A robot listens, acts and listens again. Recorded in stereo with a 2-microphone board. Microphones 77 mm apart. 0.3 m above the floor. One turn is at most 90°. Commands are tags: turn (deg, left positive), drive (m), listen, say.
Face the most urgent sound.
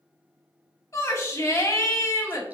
<turn deg="40"/>
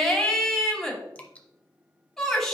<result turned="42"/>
<say>Found it: a shout, straight ahead, 1 to 2 m away.</say>